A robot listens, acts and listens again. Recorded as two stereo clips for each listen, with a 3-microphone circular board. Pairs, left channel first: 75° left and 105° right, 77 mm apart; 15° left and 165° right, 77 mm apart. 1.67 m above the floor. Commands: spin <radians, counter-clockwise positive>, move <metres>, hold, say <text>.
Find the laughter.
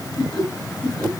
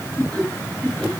spin 1.66
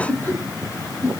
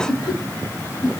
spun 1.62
spin 0.26
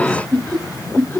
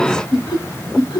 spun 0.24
spin 0.17
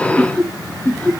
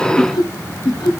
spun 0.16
spin 0.17
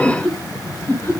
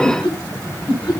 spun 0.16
spin 0.17
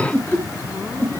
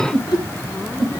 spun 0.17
spin 0.17
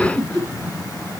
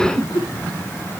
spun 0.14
say Facing the laughter.